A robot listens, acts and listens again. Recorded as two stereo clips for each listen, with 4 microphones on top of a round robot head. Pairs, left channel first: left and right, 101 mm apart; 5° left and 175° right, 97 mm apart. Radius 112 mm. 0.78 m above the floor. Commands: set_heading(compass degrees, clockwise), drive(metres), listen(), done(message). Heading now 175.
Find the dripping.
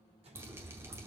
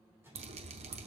set_heading(335)
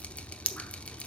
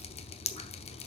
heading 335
set_heading(325)
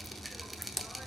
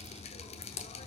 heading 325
done("Found it: dripping, straight ahead, under 1 m away.")